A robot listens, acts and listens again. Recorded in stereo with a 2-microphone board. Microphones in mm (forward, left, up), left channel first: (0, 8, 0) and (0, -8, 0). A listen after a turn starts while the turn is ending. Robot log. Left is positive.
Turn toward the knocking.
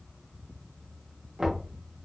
note: The knocking: about 45° right or 135° right.
cmd yaw -45
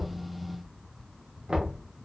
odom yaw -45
note: So it is at 90° right.
cmd yaw -90
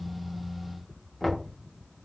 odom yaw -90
end: Found it: knocking, straight ahead, 1 to 2 m away.